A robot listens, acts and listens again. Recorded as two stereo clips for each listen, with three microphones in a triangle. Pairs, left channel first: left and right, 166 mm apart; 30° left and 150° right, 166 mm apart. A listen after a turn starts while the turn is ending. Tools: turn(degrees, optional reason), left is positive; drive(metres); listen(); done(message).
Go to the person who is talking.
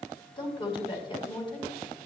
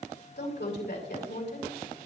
turn(degrees=30, reason="The woman speaking: 30° left.")
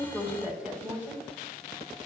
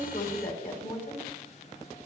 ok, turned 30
drive(metres=1.0)
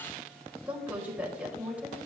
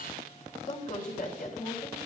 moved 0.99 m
turn(degrees=-10, reason="The woman speaking is now 10° right.")
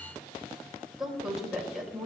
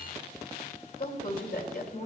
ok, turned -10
drive(metres=1.0)
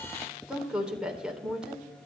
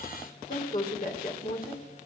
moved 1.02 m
drive(metres=1.0)
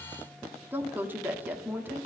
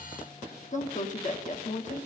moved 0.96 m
turn(degrees=-10, reason="The woman speaking is now 10° right.")
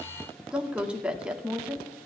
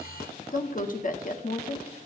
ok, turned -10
drive(metres=1.0)
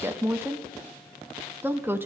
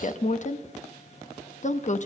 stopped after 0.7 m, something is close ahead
turn(degrees=-15, reason="The woman speaking is now 15° right.")
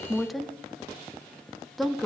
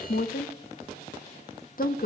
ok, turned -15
done("Arrived at the woman speaking, straight ahead.")